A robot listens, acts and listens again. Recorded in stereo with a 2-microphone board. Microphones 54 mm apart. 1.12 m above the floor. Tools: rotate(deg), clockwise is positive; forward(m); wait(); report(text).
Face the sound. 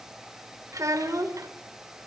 rotate(90)
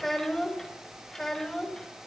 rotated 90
rotate(-10)
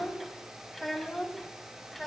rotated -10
report("Facing the child speaking, over 4 m away.")